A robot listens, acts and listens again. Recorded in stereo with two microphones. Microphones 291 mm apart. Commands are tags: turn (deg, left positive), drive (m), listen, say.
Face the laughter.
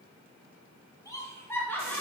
<turn deg="30"/>
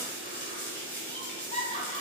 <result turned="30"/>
<turn deg="160"/>
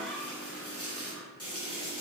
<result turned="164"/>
<listen/>
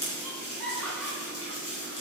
<say>Found it: laughter, straight ahead.</say>